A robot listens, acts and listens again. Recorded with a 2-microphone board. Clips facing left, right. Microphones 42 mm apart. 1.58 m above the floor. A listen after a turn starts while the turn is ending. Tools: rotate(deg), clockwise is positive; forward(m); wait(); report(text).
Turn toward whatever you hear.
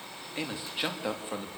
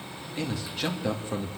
rotate(-30)
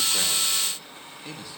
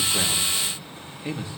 rotate(25)
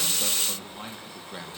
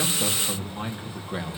rotate(20)
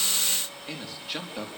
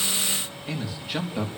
report("Facing the man speaking, over 4 m away.")